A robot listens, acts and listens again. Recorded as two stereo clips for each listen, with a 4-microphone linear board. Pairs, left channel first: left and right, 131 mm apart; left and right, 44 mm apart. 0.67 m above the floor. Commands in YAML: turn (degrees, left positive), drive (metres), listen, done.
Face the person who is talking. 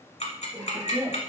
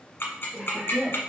turn: 30
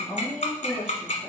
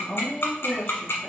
turn: 140
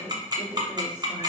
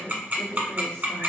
turn: 15
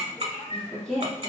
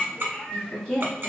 done: "Facing the woman speaking."